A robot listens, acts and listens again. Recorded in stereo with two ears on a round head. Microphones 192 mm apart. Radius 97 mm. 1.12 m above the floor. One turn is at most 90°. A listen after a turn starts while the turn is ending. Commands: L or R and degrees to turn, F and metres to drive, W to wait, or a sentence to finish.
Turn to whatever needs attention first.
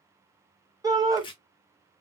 R15
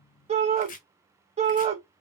R90
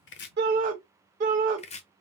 R40
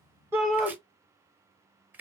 Found it: a shout, straight ahead.